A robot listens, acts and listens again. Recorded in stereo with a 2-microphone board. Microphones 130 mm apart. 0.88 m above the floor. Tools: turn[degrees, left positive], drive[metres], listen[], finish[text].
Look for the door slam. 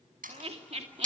Action: turn[-90]
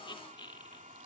Action: finish[Facing where the door slam came from. I can't hear it now.]